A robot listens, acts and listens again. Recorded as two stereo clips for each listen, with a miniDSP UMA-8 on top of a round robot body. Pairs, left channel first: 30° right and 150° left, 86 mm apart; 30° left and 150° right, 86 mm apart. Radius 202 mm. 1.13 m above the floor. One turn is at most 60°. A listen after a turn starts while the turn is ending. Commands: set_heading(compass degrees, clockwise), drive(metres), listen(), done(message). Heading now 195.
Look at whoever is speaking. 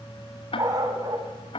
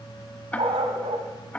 listen()
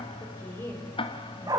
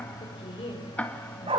set_heading(165)
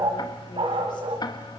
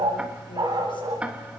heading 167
listen()
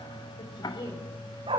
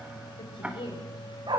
done("Found it: a woman speaking, straight ahead.")